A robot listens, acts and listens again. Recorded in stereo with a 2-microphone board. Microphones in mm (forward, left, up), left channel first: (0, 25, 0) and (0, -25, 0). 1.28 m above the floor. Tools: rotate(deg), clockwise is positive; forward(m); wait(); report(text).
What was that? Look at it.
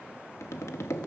rotate(-70)
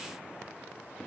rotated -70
wait()
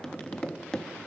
rotate(-15)
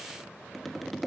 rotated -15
report("Found it: tapping, straight ahead.")